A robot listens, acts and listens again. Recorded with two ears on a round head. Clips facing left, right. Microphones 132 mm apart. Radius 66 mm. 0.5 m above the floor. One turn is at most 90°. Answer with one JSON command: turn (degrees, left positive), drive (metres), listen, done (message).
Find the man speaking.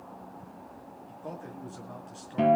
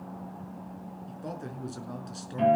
{"turn": -50}
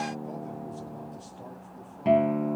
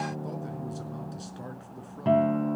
{"listen": true}
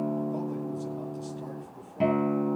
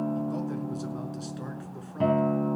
{"listen": true}
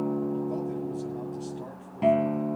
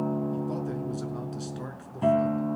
{"turn": -85}
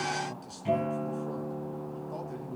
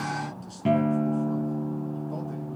{"listen": true}
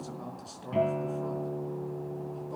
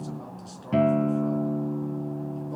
{"done": "Facing the man speaking."}